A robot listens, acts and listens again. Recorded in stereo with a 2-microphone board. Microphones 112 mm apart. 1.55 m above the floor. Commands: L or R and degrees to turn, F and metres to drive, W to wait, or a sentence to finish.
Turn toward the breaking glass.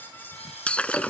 L30
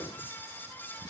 W
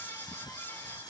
I heard breaking glass, but can't make it out now. It was about 20° right or 140° left.